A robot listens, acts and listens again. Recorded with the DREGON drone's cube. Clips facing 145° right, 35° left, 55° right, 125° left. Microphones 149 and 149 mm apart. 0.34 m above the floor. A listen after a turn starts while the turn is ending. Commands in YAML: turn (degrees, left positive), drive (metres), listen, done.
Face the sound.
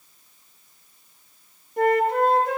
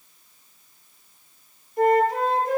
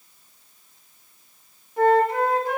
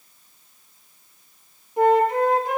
turn: -165
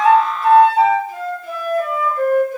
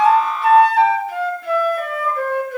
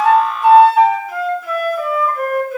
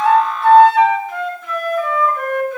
turn: 30
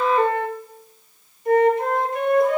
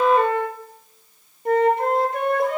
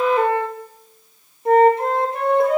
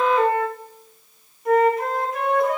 done: "Facing the flute."